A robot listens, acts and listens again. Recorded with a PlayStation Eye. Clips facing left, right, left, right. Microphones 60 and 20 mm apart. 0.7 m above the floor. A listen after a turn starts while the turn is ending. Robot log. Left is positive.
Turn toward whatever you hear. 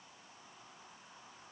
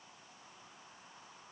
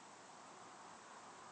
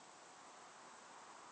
cmd idle
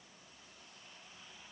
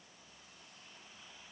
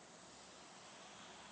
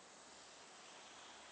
cmd idle
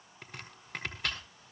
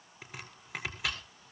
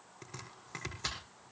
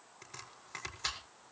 cmd yaw -30
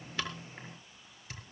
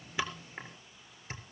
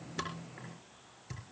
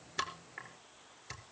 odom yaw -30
note: So it is at 150° right.
cmd yaw -150
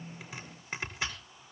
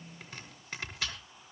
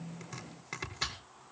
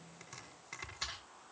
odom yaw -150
note: The chopping is now 20° left.
cmd yaw +20
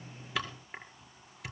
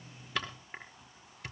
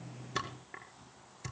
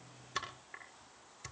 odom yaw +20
end: Facing the chopping.